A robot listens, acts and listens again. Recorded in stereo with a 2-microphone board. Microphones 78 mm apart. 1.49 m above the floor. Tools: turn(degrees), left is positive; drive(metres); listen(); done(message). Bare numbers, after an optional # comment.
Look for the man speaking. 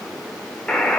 listen()
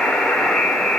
listen()
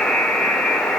done("I can't make out a man speaking, only a buzzer.")